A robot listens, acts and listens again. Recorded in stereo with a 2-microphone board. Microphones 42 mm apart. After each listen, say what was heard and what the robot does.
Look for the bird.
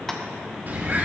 The bird: about 45° right or 135° right. Turn 45° right.
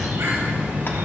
So it is at 90° right. Turn 90° right.
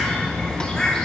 The bird is now 20° left. Turn 20° left.
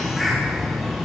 Found it: a bird, straight ahead, 2 to 4 m away.